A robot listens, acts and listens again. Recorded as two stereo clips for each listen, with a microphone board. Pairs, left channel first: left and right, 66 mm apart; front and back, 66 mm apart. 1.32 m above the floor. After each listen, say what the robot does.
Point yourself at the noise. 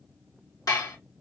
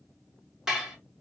Turn 100° left.
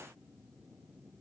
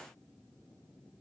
Keep listening.
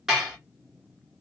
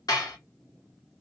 Facing the dishes clattering, 1 to 2 m away.